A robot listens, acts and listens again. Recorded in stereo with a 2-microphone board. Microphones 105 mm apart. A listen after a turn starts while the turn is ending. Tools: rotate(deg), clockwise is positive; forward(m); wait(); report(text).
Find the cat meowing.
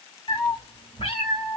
rotate(-65)
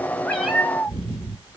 rotate(15)
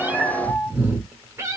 rotate(30)
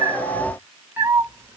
rotate(25)
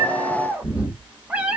rotate(10)
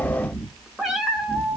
report("Found it: a cat meowing, straight ahead, 1 to 2 m away.")